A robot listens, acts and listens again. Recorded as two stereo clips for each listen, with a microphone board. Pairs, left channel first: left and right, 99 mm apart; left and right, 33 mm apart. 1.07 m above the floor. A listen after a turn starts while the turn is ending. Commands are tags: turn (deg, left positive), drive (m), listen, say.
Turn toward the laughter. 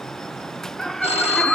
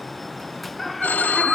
<turn deg="30"/>
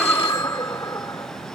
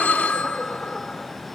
<turn deg="150"/>
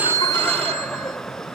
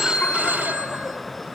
<turn deg="10"/>
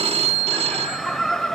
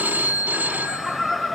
<say>Facing the laughter.</say>